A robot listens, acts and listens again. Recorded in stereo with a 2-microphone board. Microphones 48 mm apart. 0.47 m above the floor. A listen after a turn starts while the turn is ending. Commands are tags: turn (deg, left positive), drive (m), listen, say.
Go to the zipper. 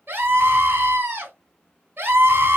<listen/>
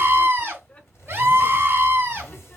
<turn deg="65"/>
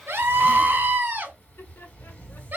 <turn deg="30"/>
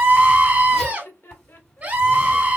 <listen/>
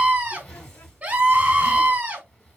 <turn deg="15"/>
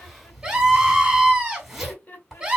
<drive m="1.0"/>
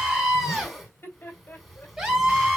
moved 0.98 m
<drive m="1.0"/>
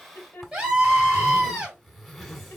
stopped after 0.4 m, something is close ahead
<turn deg="10"/>
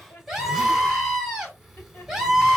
<listen/>
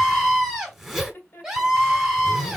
<say>I am next to the zipper.</say>